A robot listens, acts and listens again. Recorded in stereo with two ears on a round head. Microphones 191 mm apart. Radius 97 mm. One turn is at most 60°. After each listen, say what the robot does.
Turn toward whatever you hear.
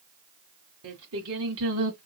Turn 60° right.
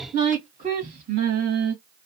Turn 45° right.
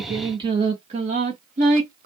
Turn 40° right.
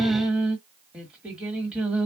Facing the singing.